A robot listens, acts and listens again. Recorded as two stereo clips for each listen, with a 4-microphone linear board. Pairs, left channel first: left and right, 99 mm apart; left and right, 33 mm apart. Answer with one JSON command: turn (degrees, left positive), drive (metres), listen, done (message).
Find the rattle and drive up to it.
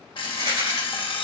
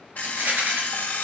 {"turn": -90}
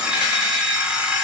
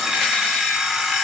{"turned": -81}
{"turn": -10}
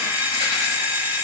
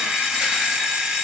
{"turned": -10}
{"listen": true}
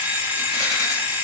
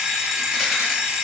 {"done": "I heard a rattle from this way, but can't make it out now. I did not reach it."}